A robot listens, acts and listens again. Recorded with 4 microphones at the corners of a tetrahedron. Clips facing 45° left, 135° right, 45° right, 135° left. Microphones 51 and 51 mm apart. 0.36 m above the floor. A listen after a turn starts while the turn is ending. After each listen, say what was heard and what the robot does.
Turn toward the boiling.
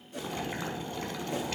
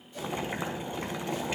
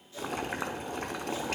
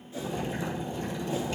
The boiling: 65° right. Turn 65° right.
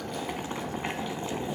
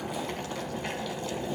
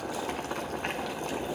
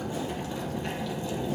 The boiling is now 20° right. Turn 20° right.
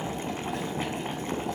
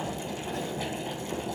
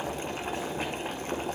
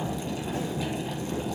Facing the boiling, 1 to 2 m away.